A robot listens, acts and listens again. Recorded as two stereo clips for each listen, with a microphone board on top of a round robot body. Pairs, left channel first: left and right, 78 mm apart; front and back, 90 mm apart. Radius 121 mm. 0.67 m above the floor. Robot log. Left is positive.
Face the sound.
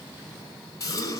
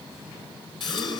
note: The gasp: 45° left.
cmd yaw +45
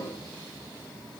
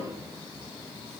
end: Facing where the gasp came from. I can't hear it now.